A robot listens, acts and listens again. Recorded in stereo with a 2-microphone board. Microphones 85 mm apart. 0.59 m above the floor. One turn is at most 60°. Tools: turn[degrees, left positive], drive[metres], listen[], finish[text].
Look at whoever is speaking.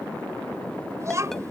Thought: The child speaking: about 35° right or 145° right.
Action: turn[-35]
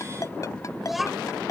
Action: finish[Found it: a child speaking, straight ahead.]